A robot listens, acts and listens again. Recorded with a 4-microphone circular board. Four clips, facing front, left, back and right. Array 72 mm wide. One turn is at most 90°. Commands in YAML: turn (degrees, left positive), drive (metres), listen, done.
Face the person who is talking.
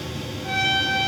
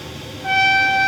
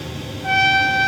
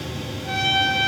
listen: true
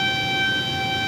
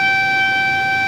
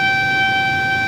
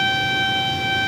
listen: true
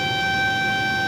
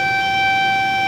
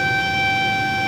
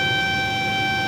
done: "I can't make out anyone speaking to turn to."